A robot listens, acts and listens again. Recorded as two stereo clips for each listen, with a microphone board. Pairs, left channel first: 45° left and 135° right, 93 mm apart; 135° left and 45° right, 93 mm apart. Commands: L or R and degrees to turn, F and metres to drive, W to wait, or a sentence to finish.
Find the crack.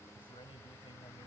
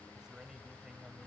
W
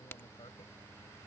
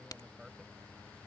L105
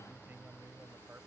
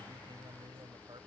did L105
Facing where the crack came from. I can't hear it now.